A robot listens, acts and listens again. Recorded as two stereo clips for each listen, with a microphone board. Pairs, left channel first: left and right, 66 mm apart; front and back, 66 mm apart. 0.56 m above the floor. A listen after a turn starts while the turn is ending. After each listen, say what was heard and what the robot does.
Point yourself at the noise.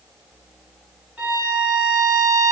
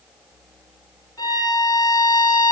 The violin: 20° right. Turn 20° right.
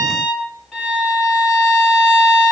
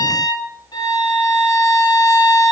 Facing the violin, 2 to 4 m away.